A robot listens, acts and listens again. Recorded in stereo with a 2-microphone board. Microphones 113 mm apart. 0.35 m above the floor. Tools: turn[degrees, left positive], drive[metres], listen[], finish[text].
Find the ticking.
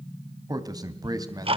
Thought: The ticking: about 55° right or 125° right.
Action: turn[-55]
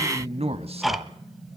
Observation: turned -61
Action: finish[Found it: ticking, straight ahead.]